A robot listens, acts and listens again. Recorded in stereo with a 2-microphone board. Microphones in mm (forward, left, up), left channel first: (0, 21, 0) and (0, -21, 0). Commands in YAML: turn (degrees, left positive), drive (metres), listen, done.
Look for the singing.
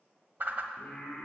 turn: 30
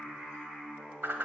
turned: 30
turn: -10
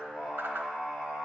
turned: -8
turn: -15
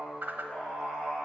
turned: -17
done: "Facing the singing, 2 to 4 m away."